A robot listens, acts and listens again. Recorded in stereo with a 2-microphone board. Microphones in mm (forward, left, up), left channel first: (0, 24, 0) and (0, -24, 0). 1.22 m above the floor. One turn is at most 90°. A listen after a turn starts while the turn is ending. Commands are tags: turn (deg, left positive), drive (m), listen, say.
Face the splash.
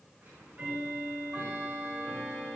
<listen/>
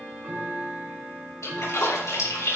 <turn deg="90"/>
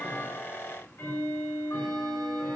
<say>Facing where the splash came from. I can't hear it now.</say>